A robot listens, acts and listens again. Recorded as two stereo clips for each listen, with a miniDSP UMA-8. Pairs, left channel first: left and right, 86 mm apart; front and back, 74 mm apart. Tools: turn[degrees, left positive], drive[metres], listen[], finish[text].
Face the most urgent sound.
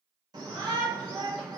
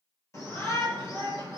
Thought: The shout: 50° right.
Action: turn[-50]
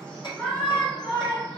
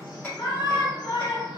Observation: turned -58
Thought: The shout is now 10° left.
Action: turn[10]
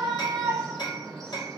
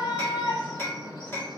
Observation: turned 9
Action: finish[Facing the shout.]